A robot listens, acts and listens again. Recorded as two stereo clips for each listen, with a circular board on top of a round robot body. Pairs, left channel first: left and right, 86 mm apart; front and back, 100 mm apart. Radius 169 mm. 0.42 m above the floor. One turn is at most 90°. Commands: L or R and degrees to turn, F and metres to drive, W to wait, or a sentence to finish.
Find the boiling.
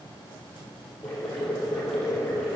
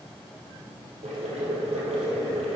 L90
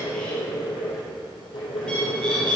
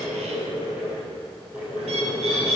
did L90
L90
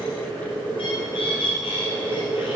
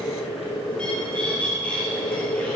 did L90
L15
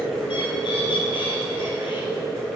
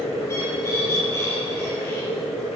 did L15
Found it: boiling, straight ahead.